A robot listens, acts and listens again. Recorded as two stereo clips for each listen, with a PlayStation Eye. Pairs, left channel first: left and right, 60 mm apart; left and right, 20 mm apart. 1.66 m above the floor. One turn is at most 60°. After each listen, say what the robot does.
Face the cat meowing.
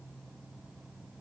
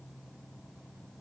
Keep listening.
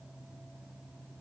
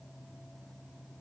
Keep listening.
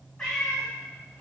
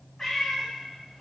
Turn 30° left.
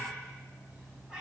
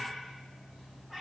Turn 15° right.
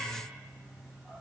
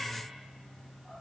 Facing the cat meowing, 2 to 4 m away.